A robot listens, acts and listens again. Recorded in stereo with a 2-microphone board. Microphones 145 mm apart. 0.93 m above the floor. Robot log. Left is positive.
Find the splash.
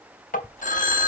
note: The splash: about 20° right or 160° right.
cmd yaw -20
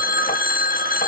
cmd idle
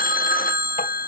end: I heard a splash, but can't make it out now. It was about straight ahead or 140° right.